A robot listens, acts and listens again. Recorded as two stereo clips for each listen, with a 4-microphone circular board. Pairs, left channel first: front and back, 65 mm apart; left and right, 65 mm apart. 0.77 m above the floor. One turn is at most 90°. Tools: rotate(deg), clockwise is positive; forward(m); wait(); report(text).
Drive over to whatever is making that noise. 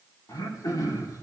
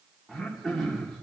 forward(1.0)
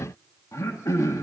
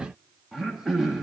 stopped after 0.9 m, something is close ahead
report("Arrived at the throat clearing, straight ahead.")